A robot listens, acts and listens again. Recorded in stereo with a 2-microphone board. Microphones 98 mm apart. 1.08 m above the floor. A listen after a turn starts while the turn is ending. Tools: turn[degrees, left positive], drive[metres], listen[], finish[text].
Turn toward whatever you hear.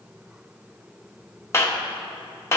Thought: The clap: about 25° left or 155° left.
Action: turn[25]
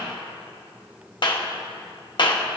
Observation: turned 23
Thought: So it is at 130° left.
Action: turn[130]
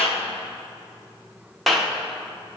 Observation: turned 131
Action: finish[Facing the clap.]